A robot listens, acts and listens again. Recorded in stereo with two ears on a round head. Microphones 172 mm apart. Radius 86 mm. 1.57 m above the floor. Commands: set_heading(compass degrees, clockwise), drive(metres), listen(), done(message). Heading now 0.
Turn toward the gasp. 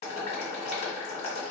listen()
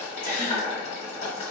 set_heading(25)
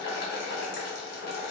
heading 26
listen()
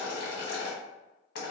done("I heard a gasp, but can't make it out now. It was about 5° left or 130° right.")